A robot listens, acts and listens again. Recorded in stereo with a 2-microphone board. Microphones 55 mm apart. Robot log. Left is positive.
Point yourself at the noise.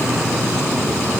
cmd idle
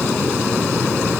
cmd idle
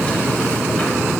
end: I can't make out anything.